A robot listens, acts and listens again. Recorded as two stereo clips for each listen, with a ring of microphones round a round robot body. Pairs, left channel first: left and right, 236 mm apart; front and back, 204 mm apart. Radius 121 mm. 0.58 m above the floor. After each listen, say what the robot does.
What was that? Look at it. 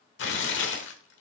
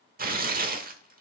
Turn 135° left.
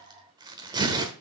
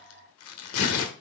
Turn 15° right.
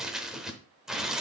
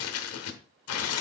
Found it: tearing paper, straight ahead, 1 to 2 m away.